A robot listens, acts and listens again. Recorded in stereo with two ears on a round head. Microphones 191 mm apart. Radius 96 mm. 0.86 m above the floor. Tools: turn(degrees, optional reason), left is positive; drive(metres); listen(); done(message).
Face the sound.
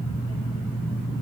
listen()
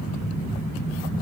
listen()
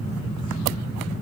done("I can't make out anything to turn to.")